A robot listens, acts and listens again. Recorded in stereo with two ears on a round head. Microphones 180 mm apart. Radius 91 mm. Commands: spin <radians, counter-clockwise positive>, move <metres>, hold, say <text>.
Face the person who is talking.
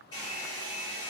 hold
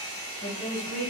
spin 0.96
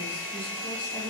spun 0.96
hold
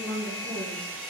spin 0.17
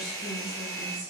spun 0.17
say Found it: a woman speaking, straight ahead, 1 to 2 m away.